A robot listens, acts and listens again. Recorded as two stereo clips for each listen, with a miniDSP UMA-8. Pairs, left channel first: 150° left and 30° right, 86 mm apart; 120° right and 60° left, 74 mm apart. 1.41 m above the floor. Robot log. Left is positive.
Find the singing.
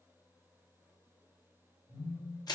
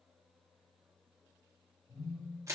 cmd idle
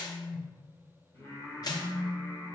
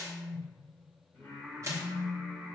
note: The singing: straight behind.
cmd yaw +180
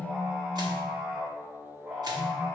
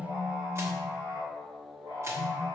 note: The singing is now 45° left.
cmd yaw +45
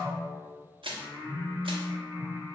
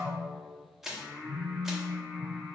note: The singing is now 10° left.
cmd yaw +10
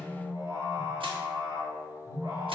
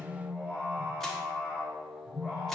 end: Found it: singing, straight ahead.